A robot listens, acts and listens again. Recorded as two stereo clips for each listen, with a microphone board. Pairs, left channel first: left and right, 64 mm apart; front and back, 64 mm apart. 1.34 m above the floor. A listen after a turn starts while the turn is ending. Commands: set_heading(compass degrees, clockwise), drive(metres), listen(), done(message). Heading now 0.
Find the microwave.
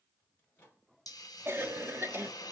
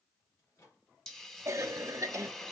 set_heading(330)
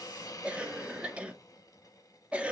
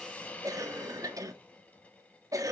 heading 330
listen()
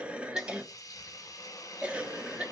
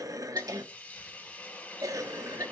listen()
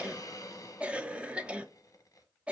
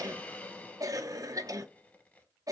done("I heard a microwave from this way, but can't make it out now.")